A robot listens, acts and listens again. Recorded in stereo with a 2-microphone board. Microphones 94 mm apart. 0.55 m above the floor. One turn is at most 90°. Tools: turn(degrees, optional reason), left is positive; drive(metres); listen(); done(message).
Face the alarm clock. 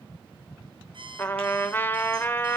turn(degrees=-60, reason="The alarm clock: about 60° right or 120° right.")
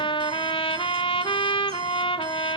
listen()
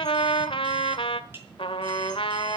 listen()
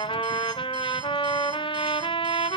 done("I heard an alarm clock, but can't make it out now. It was about straight ahead or 60° right.")